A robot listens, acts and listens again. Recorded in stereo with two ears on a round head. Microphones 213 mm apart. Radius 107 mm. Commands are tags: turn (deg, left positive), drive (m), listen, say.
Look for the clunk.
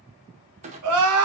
<turn deg="-30"/>
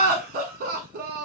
<listen/>
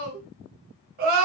<say>I heard a clunk, but can't make it out now. It was about straight ahead or 120° right.</say>